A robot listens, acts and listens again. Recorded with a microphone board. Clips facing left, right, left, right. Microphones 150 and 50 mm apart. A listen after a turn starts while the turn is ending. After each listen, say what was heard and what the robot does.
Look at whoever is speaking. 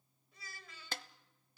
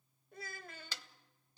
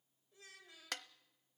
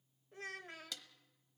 The child speaking: about 55° right or 125° right. Turn 55° right.
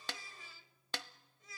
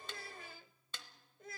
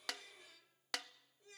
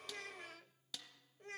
So it is at 65° right. Turn 65° right.
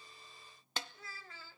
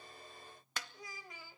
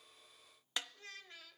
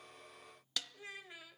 The child speaking is now 15° right. Turn 15° right.
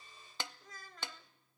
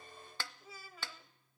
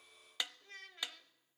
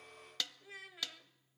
The child speaking is now 10° right. Turn 10° right.
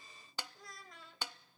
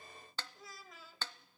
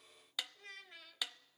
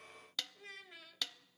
Found it: a child speaking, straight ahead.